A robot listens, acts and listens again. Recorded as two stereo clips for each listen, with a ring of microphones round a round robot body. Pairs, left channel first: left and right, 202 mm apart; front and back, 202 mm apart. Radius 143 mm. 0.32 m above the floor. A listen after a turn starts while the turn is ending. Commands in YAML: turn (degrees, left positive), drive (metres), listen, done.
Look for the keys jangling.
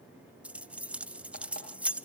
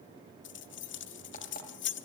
done: "Found it: keys jangling, straight ahead, 1 to 2 m away."